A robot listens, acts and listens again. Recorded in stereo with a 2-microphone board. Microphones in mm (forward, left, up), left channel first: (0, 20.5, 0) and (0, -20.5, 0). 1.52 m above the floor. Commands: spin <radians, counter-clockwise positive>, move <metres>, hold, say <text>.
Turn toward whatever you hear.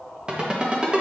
spin -0.35
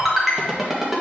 say Found it: a ringtone, straight ahead.